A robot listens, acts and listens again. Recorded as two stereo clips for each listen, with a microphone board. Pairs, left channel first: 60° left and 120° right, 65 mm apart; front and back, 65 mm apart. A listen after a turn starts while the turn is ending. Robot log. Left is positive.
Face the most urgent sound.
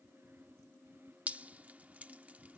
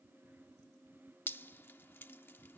cmd idle
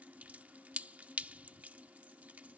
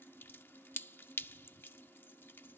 cmd idle
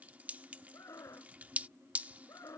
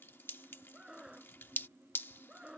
note: The scream: 105° left.
cmd yaw +105
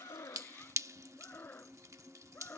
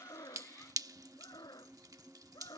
end: Found it: a scream, straight ahead.